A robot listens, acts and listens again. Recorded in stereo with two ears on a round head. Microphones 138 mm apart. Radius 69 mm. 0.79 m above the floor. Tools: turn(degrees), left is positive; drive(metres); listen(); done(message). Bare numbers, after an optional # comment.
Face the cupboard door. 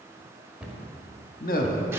turn(-30)
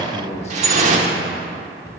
# So it is at 25° left.
turn(25)
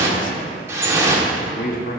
listen()
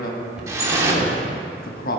done("Found it: a cupboard door, straight ahead.")